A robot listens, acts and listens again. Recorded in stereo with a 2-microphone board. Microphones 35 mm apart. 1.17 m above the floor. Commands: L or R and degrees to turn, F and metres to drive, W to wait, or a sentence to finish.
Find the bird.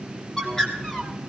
L15
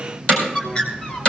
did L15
L145
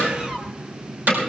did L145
Facing the bird, 2 to 4 m away.